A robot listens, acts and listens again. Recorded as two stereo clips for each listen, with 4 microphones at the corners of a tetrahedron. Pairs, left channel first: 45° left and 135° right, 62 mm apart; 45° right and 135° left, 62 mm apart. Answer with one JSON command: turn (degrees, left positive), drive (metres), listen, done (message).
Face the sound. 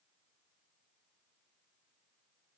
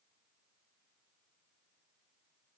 {"listen": true}
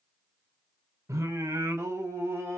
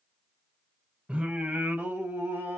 {"turn": 175}
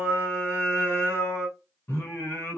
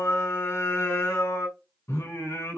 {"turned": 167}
{"turn": -10}
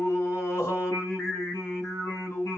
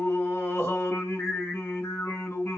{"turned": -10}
{"done": "Found it: singing, straight ahead."}